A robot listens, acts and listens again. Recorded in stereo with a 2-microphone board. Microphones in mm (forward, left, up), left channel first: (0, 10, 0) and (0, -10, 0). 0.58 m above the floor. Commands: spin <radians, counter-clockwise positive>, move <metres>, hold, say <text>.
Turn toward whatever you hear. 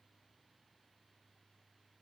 hold
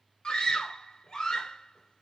spin 0.79
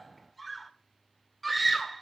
say Found it: a scream, straight ahead, 2 to 4 m away.